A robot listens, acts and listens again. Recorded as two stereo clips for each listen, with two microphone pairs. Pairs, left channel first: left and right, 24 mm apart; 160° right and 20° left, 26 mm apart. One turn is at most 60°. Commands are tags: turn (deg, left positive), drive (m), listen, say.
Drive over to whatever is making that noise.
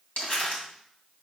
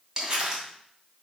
<turn deg="60"/>
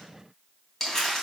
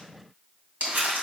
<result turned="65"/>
<turn deg="20"/>
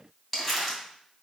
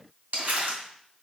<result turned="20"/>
<drive m="1.0"/>
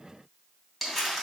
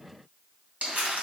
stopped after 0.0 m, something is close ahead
<say>Blocked. The crumpling is further on, straight ahead.</say>